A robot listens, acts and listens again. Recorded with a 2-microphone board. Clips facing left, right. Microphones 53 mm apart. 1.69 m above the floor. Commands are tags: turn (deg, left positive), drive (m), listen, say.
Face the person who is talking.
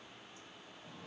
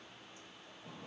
<listen/>
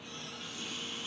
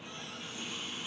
<listen/>
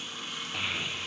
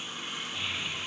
<turn deg="55"/>
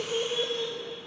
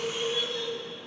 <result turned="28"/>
<turn deg="45"/>
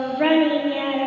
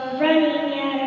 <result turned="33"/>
<turn deg="10"/>
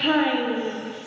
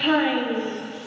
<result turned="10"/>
<say>Facing the child speaking.</say>